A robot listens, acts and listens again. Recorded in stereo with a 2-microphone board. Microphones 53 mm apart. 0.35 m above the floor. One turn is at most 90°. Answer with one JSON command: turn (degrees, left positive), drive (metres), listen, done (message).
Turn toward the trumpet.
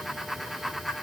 {"listen": true}
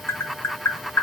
{"listen": true}
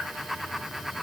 {"done": "I can't make out a trumpet to turn to."}